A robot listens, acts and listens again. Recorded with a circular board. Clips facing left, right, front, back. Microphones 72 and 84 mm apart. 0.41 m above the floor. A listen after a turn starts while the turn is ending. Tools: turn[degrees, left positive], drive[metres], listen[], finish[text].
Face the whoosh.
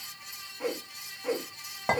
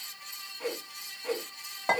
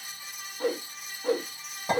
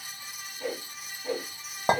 Thought: The whoosh: 15° left.
Action: turn[15]
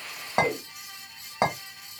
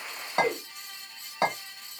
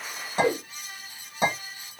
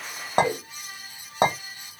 Action: finish[Facing the whoosh, under 1 m away.]